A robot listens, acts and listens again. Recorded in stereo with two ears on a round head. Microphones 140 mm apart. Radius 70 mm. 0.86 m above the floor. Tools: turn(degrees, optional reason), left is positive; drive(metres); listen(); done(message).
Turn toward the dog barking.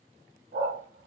turn(degrees=-70, reason="The dog barking: about 70° right or 110° right.")
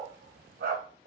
turn(degrees=-60, reason="So it is at 60° right.")
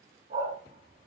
turn(degrees=-50, reason="The dog barking is now 50° right.")
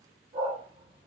turn(degrees=-30, reason="The dog barking is now 30° right.")
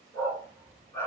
turn(degrees=20, reason="The dog barking is now 20° left.")
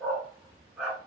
done("Found it: a dog barking, straight ahead, 2 to 4 m away.")